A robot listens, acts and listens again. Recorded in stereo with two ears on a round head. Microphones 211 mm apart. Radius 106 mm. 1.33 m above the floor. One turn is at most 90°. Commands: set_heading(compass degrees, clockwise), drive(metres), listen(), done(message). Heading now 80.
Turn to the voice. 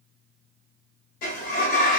listen()
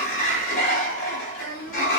set_heading(25)
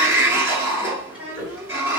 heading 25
done("Facing the child speaking.")